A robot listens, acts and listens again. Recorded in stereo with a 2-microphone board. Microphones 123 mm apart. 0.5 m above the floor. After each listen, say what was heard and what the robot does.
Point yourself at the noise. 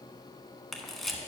Turn 30° left.
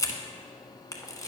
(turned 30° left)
So it is at 150° left. Turn 150° left.
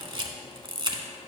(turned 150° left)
The camera shutter is now 40° right. Turn 40° right.
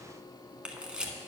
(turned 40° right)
The camera shutter is now 10° right. Turn 10° right.
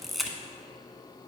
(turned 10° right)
Found it: a camera shutter, straight ahead, 1 to 2 m away.